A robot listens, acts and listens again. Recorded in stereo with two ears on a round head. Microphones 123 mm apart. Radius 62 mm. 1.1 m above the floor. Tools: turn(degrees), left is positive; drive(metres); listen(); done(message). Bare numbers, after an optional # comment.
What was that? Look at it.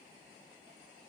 listen()
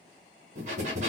# The breathing: about 55° right or 125° right.
turn(-55)
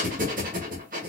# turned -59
# So it is at 65° right.
turn(-65)
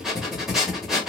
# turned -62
done("Facing the breathing.")